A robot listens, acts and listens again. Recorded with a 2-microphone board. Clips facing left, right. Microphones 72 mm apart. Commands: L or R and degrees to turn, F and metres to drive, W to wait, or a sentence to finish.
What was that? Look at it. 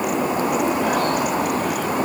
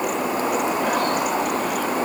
W
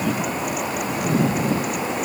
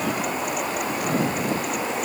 W
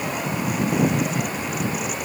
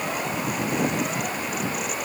I can't make out anything to turn to.